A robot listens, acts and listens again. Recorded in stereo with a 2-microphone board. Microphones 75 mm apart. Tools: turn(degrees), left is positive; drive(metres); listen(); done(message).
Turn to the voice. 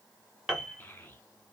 turn(degrees=25)
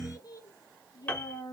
turn(degrees=125)
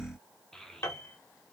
done("Found it: a child speaking, straight ahead, under 1 m away.")